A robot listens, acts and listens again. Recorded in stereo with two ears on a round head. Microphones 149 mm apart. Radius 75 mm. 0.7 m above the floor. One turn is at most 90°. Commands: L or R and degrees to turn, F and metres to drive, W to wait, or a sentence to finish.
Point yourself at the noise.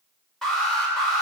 L30
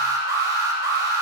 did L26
R25
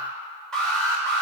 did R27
Facing the alarm.